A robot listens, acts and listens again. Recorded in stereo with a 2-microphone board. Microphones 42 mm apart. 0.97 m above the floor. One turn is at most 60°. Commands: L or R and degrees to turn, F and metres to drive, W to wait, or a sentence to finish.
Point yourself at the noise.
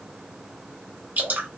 R50
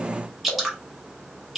Facing the dripping, 1 to 2 m away.